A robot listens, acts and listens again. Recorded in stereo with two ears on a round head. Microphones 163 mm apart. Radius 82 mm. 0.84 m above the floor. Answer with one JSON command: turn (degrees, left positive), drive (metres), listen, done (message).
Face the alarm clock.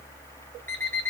{"turn": 30}
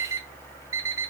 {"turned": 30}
{"turn": -15}
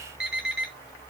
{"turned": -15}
{"done": "Found it: an alarm clock, straight ahead, 2 to 4 m away."}